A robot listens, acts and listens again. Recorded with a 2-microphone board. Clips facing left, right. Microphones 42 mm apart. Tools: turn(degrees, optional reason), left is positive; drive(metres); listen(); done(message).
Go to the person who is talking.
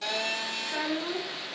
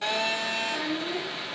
turn(degrees=70, reason="The child speaking: about 70° left or 110° left.")
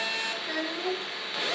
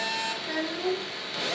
drive(metres=1.0)
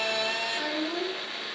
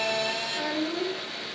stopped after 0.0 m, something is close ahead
turn(degrees=10, reason="The child speaking is now 10° left.")
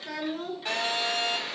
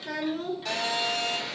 done("Something is in my way. I am facing the child speaking but have not reached it.")